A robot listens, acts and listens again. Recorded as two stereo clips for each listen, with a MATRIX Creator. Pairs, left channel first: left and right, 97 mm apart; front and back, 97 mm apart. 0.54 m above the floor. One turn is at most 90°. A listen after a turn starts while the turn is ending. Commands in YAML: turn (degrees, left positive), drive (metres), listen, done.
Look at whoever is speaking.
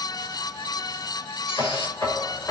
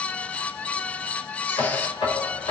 listen: true
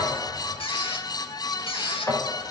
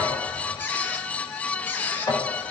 listen: true
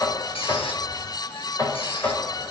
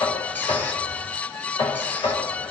done: "I can't make out anyone speaking, only a squeak and knocking."